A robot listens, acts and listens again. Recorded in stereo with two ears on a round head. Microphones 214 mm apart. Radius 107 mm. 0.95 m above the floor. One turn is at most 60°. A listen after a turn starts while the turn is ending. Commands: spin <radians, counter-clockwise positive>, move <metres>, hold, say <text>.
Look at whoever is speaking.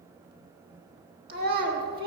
spin -0.70
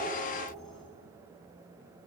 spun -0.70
hold
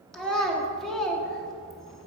say Facing the child speaking, 1 to 2 m away.